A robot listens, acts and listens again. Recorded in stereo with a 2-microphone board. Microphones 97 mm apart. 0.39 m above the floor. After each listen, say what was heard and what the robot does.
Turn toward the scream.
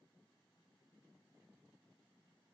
Keep listening.
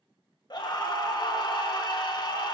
The scream: about 50° left or 130° left. Turn 50° left.
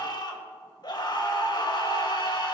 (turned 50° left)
So it is at 65° left. Turn 65° left.
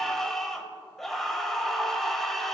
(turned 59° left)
Facing the scream.